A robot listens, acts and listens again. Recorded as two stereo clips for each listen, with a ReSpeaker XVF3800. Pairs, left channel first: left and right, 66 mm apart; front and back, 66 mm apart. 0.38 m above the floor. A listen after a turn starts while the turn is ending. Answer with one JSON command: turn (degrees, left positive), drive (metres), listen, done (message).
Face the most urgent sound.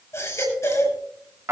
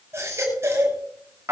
{"turn": 130}
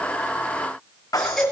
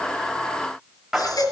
{"done": "Found it: a baby crying, straight ahead."}